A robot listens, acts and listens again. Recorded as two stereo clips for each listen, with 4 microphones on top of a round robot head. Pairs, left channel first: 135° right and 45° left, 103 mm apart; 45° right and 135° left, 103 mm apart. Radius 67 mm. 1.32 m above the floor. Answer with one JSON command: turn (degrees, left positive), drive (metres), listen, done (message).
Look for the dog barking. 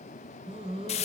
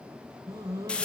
{"turn": 75}
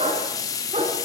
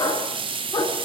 {"turn": 15}
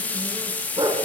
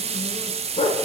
{"done": "Found it: a dog barking, straight ahead."}